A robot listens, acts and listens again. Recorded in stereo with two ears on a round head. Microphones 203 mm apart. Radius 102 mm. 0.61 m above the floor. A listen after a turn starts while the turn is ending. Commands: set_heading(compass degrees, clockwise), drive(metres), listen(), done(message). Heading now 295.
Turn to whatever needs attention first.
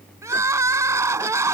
set_heading(325)
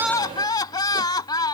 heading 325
set_heading(305)
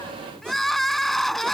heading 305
done("Found it: crying, straight ahead.")